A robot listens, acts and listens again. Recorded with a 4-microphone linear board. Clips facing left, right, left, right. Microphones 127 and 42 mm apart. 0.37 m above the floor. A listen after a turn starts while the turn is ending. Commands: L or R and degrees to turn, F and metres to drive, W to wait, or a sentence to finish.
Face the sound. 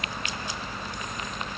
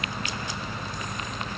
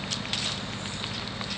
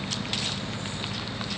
W
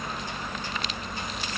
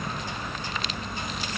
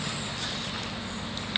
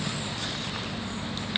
W
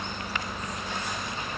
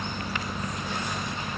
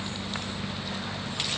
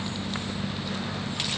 I can't make out anything to turn to.